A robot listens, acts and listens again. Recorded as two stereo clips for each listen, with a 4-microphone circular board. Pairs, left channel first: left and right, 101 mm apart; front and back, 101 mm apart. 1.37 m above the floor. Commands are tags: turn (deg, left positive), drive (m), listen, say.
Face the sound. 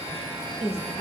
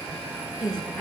<turn deg="85"/>
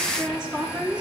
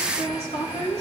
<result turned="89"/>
<say>Facing the woman speaking.</say>